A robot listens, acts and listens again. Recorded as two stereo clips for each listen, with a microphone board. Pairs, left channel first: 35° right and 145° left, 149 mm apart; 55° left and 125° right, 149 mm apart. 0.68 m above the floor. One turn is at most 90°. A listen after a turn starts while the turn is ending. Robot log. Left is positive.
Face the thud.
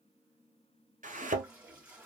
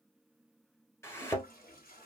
note: The thud: 125° left.
cmd yaw +90
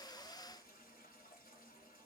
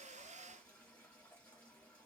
note: Nothing new. It was at 35° left.
cmd yaw +35
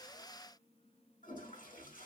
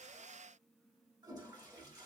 end: I heard a thud from this way, but can't make it out now.